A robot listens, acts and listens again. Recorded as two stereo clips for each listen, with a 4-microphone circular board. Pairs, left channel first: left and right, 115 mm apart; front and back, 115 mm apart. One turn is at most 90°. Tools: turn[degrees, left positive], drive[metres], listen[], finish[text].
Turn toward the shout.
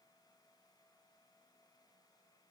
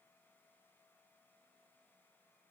Action: listen[]
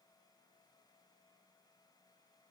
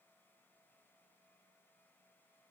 Action: listen[]
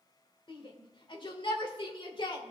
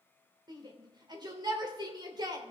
Thought: The shout: 130° left.
Action: turn[90]
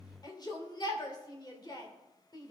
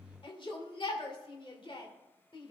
Thought: The shout is now 40° left.
Action: turn[40]
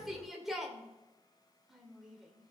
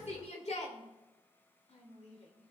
Action: finish[Found it: a shout, straight ahead, 2 to 4 m away.]